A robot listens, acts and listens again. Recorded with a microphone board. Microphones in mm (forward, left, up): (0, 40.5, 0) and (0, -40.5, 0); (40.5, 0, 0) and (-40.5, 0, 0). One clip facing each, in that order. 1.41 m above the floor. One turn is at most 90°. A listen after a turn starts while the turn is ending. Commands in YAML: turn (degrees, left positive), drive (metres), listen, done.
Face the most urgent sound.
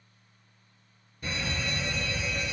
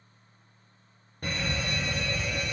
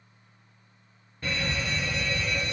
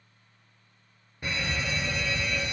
turn: -90
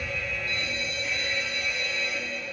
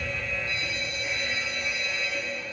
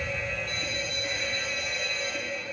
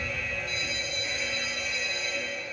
turn: -25
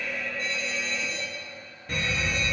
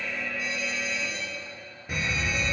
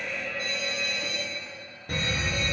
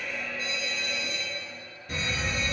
turn: -10
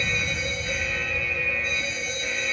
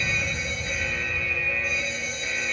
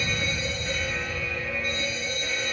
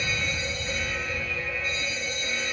done: "Facing the fire alarm."